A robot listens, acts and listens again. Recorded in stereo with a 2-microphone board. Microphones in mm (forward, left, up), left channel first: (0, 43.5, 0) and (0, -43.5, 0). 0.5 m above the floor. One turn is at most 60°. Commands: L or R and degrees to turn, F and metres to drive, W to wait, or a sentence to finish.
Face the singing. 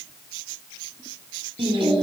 R60
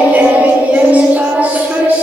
R15
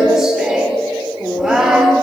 Found it: singing, straight ahead, 1 to 2 m away.